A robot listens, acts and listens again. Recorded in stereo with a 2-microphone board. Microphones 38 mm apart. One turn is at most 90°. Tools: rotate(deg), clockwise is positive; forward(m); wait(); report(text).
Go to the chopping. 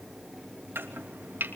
rotate(90)
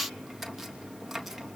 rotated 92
rotate(10)
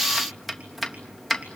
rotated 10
forward(1.0)
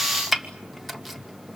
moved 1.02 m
forward(1.0)
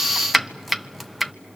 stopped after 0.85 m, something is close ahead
report("I am next to the chopping.")